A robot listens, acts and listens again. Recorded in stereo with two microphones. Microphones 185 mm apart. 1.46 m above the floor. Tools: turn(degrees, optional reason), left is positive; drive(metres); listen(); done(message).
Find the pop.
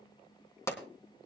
turn(degrees=15, reason="The pop: about 15° left or 165° left.")
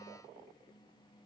listen()
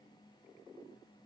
done("I heard a pop, but can't make it out now. It was about straight ahead or 150° left.")